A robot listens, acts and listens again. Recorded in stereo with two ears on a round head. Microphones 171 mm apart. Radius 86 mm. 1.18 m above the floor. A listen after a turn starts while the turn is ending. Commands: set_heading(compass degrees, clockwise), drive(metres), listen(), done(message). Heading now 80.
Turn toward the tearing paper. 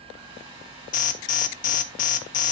listen()
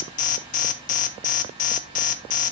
listen()
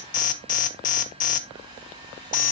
done("I can't make out tearing paper to turn to.")